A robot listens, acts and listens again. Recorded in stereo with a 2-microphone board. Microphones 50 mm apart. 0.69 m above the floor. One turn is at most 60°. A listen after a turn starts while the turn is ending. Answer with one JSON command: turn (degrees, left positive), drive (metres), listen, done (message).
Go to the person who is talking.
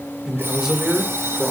{"turn": -30}
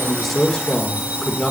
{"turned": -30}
{"turn": 20}
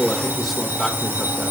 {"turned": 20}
{"drive": 1.0}
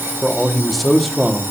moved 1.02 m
{"drive": 1.0}
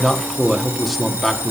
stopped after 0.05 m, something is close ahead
{"done": "Arrived at the man speaking, straight ahead."}